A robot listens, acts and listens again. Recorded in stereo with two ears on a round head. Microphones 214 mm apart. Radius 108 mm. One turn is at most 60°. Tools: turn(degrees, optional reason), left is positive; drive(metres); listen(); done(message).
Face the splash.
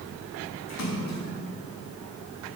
turn(degrees=60, reason="The splash: about 65° left or 115° left.")
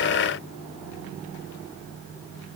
listen()
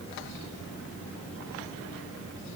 done("I heard a splash, but can't make it out now. It was about 5° left or 55° left.")